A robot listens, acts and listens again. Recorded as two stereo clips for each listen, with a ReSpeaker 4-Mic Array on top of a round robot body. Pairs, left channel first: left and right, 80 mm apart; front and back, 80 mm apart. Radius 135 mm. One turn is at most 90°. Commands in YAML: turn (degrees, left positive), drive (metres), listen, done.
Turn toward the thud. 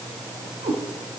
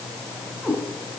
listen: true
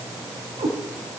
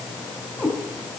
listen: true
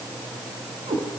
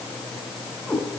done: "I can't make out a thud, only a cat meowing."